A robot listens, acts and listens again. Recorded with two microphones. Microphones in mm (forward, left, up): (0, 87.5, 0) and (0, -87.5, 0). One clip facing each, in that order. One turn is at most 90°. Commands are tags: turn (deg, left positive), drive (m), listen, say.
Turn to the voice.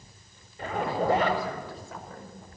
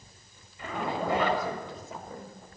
<turn deg="-20"/>
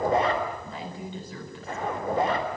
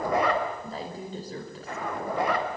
<turn deg="-90"/>
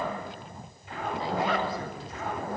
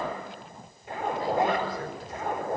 <turn deg="-55"/>
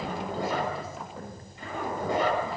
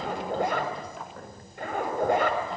<say>Facing the woman speaking.</say>